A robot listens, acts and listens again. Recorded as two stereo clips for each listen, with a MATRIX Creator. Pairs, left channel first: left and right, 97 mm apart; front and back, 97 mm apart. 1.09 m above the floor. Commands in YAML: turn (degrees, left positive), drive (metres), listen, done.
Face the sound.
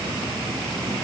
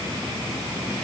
listen: true
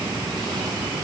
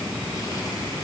listen: true
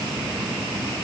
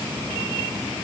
done: "I can't make out anything."